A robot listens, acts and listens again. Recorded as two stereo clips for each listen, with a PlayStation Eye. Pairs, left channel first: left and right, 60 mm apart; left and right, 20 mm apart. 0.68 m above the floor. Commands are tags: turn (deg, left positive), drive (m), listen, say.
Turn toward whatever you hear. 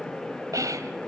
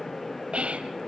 <turn deg="-70"/>
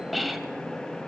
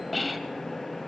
<say>Facing the whispering.</say>